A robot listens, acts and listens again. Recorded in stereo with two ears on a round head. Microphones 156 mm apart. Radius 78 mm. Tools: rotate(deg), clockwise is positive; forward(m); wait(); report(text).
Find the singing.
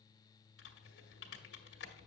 wait()
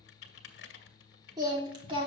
rotate(35)
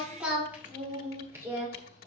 rotate(20)
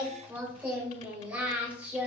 rotate(10)
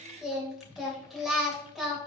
report("Found it: singing, straight ahead.")